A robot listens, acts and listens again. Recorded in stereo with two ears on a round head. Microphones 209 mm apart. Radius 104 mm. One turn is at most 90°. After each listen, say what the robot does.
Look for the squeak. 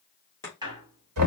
Turn 20° right.
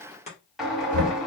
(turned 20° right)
Facing the squeak.